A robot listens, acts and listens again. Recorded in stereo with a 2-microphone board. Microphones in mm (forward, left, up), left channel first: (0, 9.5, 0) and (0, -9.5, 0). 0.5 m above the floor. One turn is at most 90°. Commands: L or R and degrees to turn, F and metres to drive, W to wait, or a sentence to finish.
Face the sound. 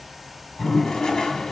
L50
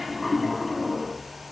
Found it: a toilet flushing, straight ahead.